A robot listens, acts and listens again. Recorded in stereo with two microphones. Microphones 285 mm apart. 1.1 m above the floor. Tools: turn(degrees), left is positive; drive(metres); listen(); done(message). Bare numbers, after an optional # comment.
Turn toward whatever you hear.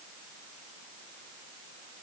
listen()
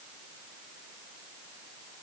listen()
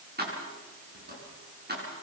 # The keys jangling: about 35° right or 145° right.
turn(-35)
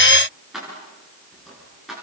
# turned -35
done("Facing the keys jangling.")